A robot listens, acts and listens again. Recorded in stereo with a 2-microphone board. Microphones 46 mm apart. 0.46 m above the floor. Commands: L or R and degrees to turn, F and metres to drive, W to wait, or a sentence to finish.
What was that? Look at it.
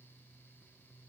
W
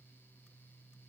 W
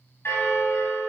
L65
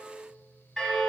L10
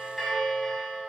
Found it: a bell, straight ahead, 2 to 4 m away.